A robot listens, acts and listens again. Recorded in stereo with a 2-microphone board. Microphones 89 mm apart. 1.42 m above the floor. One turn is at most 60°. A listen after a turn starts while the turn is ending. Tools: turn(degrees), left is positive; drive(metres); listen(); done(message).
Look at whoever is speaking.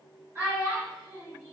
turn(degrees=-45)
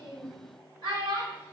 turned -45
turn(degrees=-60)
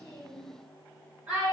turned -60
turn(degrees=-20)
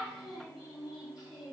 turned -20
done("Facing the child speaking.")